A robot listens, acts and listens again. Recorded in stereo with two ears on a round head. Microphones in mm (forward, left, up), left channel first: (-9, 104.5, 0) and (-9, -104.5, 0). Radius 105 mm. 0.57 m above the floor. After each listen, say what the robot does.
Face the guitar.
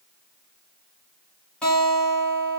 Turn 30° left.
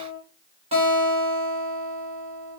Turn 25° right.
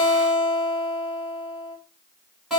Found it: a guitar, straight ahead.